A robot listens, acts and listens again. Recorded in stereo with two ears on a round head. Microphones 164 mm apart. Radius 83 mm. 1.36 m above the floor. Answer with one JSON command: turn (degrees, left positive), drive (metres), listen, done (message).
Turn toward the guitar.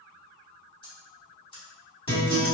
{"turn": 30}
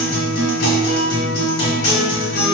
{"turn": 120}
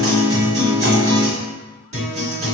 {"turn": -35}
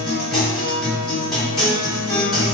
{"done": "Found it: a guitar, straight ahead, 1 to 2 m away."}